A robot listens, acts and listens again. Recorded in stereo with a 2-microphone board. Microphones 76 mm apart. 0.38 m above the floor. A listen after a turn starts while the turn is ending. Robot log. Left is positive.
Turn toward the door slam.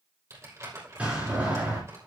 note: The door slam: about 15° right or 165° right.
cmd yaw -15
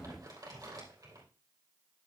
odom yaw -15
cmd idle
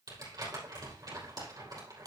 end: I heard a door slam, but can't make it out now. It was about straight ahead or 150° right.